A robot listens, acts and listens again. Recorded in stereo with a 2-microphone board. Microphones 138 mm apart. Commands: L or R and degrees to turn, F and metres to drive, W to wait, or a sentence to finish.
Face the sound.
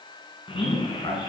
L40
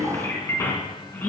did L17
L15
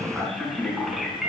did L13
Found it: a man speaking, straight ahead.